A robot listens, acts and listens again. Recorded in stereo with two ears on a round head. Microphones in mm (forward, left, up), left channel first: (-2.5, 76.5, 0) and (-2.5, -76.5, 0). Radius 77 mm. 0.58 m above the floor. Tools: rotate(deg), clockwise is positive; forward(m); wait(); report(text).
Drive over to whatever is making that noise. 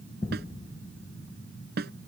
rotate(65)
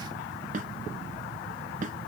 rotate(45)
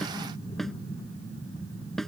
forward(1.0)
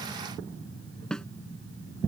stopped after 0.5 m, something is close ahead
report("Something is in my way. I am facing the snare drum but have not reached it.")